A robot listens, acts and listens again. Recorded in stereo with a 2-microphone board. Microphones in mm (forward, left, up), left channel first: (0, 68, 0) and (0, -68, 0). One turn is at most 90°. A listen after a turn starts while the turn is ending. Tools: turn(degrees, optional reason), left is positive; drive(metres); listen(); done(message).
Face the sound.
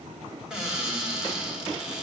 turn(degrees=-30)
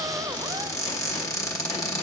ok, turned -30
turn(degrees=25, reason="So it is at 25° left.")
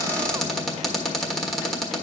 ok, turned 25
done("Facing the cupboard door.")